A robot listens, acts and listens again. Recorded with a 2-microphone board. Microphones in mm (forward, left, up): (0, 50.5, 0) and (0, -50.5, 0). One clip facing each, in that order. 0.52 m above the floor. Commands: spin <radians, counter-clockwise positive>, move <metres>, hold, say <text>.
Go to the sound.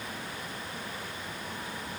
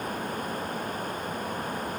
hold
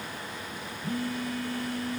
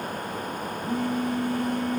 spin -0.44
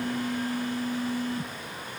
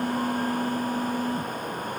spin -2.27
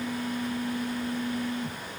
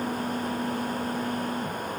spin -0.61
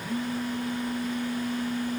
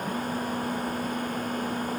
spin -0.17
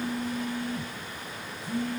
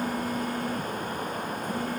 move 1.0
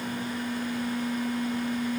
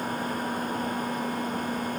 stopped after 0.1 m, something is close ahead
say Something is in my way. I am facing the phone buzzing but have not reached it.